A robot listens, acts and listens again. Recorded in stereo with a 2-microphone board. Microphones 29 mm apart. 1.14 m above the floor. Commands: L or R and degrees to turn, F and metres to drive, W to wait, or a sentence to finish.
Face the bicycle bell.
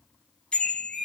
L35
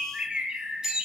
Facing the bicycle bell.